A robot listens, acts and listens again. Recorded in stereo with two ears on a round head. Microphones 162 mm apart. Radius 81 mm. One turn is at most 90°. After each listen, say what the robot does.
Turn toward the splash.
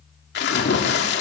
Turn 65° left.
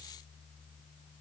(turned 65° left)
Keep listening.
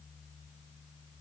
I heard a splash, but can't make it out now. It was about straight ahead or 50° left.